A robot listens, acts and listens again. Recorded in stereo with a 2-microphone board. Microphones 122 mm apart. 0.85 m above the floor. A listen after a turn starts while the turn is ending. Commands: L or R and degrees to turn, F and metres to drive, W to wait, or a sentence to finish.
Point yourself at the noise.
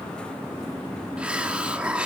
R30
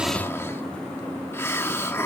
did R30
L20
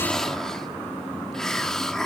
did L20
Facing the hiss, 1 to 2 m away.